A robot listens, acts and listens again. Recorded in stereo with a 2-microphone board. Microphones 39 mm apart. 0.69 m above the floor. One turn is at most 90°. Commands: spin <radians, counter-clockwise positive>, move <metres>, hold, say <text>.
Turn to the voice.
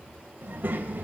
spin -0.87
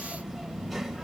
say Found it: a child speaking, straight ahead, 2 to 4 m away.